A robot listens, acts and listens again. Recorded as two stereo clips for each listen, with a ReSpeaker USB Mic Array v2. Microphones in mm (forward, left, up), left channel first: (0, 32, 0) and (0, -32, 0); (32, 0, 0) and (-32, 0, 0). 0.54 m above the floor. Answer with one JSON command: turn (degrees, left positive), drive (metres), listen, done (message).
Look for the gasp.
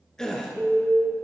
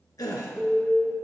{"turn": 10}
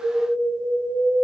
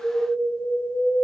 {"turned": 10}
{"done": "Facing where the gasp came from. I can't hear it now."}